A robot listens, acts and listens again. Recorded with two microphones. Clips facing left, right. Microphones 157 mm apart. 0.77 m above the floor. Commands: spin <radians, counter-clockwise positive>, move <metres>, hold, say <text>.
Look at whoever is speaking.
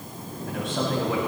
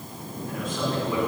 spin 1.57
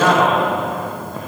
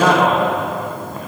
say Found it: a man speaking, straight ahead, over 4 m away.